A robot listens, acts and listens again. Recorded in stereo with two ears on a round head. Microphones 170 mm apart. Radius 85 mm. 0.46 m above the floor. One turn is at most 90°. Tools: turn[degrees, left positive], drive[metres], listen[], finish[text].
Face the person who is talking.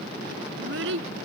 Thought: The child speaking: about 75° right or 105° right.
Action: turn[-75]
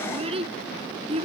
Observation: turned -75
Thought: So it is at 30° right.
Action: turn[-30]
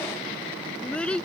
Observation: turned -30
Action: finish[Facing the child speaking.]